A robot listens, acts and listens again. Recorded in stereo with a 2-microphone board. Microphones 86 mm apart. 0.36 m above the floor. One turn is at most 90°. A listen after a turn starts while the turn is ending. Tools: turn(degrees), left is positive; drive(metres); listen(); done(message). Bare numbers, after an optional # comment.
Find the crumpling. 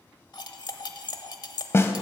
listen()
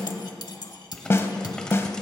turn(30)
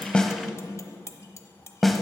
listen()
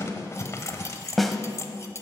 # So it is at 140° left.
turn(90)
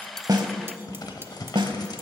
# The crumpling is now 65° left.
turn(65)
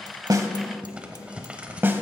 # The crumpling is now 15° right.
turn(-15)
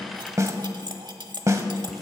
listen()
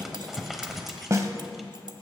done("Found it: crumpling, straight ahead, 1 to 2 m away.")